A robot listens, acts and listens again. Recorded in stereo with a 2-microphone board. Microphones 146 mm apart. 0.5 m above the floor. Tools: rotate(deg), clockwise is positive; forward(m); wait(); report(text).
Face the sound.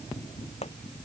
rotate(-45)
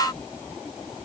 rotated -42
wait()
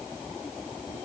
report("I heard a pop, but can't make it out now. It was about 5° left or 90° left.")